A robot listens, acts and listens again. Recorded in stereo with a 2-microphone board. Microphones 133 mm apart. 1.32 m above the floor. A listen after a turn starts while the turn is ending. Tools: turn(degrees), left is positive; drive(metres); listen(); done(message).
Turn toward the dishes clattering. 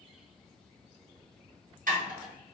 turn(degrees=-75)
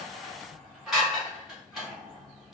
done("Facing the dishes clattering.")